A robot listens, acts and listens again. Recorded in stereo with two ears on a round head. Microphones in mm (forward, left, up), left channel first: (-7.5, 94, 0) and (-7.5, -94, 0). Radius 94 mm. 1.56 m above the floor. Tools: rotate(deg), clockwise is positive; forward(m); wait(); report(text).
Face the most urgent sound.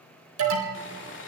rotate(75)
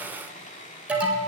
report("Found it: an alarm, straight ahead, 2 to 4 m away.")